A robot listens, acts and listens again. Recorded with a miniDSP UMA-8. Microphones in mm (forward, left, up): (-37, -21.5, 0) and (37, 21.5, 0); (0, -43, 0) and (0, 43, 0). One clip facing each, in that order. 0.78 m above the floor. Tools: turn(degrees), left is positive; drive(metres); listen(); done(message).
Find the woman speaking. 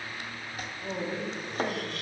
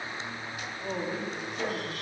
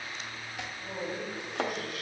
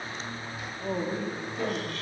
turn(degrees=110)
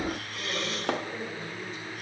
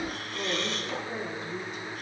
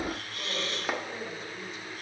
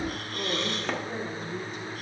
turn(degrees=55)
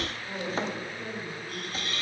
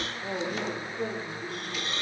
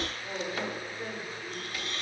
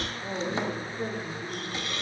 turn(degrees=25)
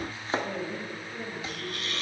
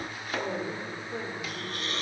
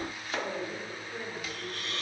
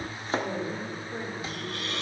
turn(degrees=20)
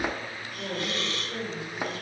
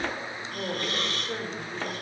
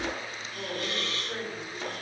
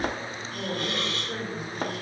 done("Found it: a woman speaking, straight ahead.")